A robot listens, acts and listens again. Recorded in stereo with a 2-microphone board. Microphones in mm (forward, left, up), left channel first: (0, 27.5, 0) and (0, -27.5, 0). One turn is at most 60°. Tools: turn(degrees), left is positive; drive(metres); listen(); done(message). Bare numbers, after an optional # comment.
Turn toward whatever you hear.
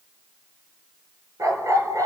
turn(-60)
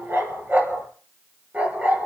# So it is at 25° right.
turn(-25)
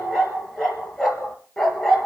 done("Found it: a dog barking, straight ahead, 2 to 4 m away.")